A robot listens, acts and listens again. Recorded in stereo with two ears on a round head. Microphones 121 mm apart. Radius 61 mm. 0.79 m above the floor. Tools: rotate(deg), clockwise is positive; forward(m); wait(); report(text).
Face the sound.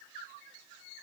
wait()
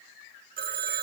rotate(90)
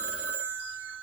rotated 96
rotate(10)
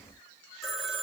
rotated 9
report("Facing the phone ringing.")